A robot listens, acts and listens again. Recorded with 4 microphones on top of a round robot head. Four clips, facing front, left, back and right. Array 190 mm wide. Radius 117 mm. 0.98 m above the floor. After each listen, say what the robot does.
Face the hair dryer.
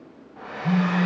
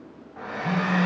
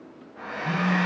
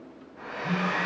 Turn 70° left.
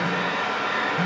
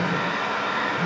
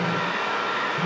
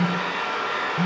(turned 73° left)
Found it: a hair dryer, straight ahead, over 4 m away.